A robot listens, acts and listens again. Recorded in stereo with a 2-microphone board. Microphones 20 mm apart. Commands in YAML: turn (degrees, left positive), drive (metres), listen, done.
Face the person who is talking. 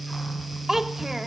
turn: -25
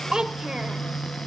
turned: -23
turn: -130
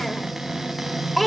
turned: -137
done: "Found it: a child speaking, straight ahead, 1 to 2 m away."